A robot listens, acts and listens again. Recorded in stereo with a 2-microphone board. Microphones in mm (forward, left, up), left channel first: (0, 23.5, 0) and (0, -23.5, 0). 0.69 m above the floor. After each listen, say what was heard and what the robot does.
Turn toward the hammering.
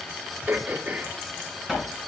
Turn 30° right.
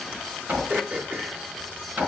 So it is at 140° right. Turn 140° right.
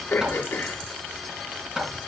The hammering is now 10° right. Turn 10° right.
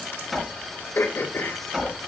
Found it: hammering, straight ahead.